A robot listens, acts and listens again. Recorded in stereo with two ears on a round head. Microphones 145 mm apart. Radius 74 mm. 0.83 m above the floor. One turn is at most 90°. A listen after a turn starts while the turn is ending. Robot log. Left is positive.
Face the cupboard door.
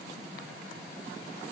cmd idle
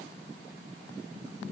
cmd idle
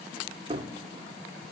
note: The cupboard door: about 30° right or 150° right.
cmd yaw -30
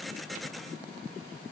cmd idle
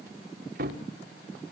note: So it is at 115° right.
cmd yaw -90
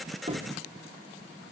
note: Nothing new. It was at 25° right.
cmd yaw -25
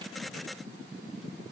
cmd idle
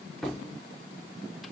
end: Found it: a cupboard door, straight ahead.